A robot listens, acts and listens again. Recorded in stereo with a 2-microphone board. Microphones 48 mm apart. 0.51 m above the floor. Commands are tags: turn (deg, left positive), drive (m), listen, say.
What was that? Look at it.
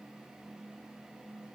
<listen/>
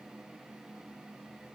<listen/>
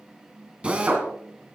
<turn deg="-25"/>
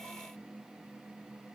<listen/>
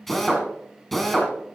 <say>Found it: a drill, straight ahead, 2 to 4 m away.</say>